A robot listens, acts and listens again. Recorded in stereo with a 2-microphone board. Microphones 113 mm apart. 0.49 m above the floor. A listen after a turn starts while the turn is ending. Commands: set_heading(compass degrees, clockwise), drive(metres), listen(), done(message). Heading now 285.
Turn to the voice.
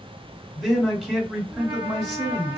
set_heading(255)
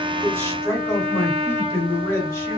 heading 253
set_heading(108)
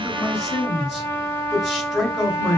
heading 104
done("Facing the man speaking.")